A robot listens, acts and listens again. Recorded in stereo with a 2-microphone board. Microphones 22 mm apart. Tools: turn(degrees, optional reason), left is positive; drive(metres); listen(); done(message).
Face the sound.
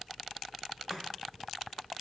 turn(degrees=-45, reason="The chopping: about 45° right or 135° right.")
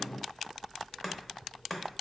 done("Facing the chopping, under 1 m away.")